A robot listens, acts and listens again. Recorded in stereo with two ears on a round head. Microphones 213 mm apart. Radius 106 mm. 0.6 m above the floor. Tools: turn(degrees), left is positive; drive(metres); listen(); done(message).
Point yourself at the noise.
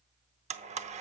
turn(degrees=-30)
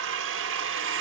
turn(degrees=-120)
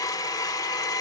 turn(degrees=15)
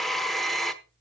done("Found it: a blender, straight ahead, under 1 m away.")